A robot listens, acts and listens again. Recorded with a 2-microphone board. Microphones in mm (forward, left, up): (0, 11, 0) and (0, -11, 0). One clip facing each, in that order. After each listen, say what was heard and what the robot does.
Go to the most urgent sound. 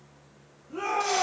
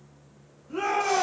The shout: about 40° right or 140° right. Turn 40° right.
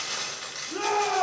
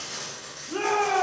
So it is at 95° right. Turn 95° right.
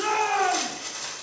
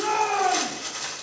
The shout is now 20° left. Turn 20° left.
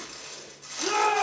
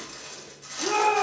Drive 1.0 m forward.
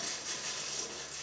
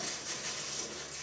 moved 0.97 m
Keep listening.
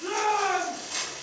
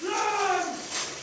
Drive 1.0 m forward.
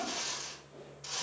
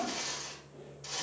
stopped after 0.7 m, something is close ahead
The shout is now 10° right. Turn 10° right.
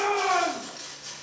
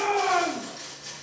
I am next to the shout.